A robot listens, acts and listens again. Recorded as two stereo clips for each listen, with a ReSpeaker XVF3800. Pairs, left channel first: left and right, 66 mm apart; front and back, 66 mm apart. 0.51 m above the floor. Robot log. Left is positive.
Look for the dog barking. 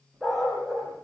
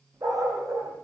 note: The dog barking: straight behind.
cmd yaw +180
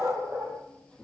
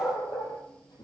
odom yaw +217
note: The dog barking is now 25° right.
cmd yaw -25
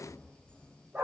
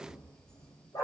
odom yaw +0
note: The dog barking is now 20° right.
cmd yaw -20
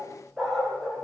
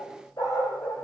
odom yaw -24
note: The dog barking is now 10° left.
cmd yaw +10
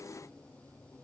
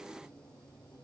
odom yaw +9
cmd idle
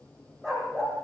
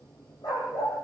end: Found it: a dog barking, straight ahead.